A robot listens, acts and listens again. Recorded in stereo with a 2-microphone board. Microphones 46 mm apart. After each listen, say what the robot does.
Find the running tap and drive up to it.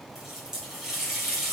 Turn 30° right.
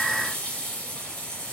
Turn 15° left.
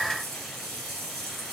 Drive 1.0 m forward.
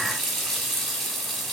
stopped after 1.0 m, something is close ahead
Arrived at the running tap, straight ahead.